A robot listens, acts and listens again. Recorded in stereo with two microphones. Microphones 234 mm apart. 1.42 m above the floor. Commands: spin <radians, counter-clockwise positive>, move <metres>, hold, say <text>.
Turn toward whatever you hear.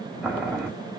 spin -0.52
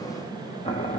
spin 0.44
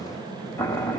spin 0.17
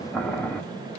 say Facing the boiling.